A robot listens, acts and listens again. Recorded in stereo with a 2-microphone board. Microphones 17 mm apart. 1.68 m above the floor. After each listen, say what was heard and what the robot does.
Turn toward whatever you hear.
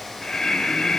The breathing: about 55° left or 125° left. Turn 55° left.
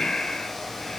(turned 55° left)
So it is at 55° left. Turn 55° left.
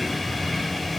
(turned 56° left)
Found it: breathing, straight ahead.